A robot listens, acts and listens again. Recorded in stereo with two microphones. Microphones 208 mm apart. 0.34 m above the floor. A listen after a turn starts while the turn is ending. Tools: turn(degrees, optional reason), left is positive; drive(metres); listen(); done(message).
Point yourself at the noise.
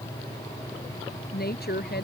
turn(degrees=50, reason="The woman speaking: about 50° left or 130° left.")
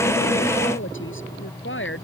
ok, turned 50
turn(degrees=70, reason="So it is at 70° left.")
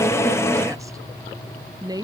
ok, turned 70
turn(degrees=-20, reason="The woman speaking is now 20° right.")
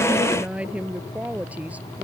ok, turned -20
done("Facing the woman speaking.")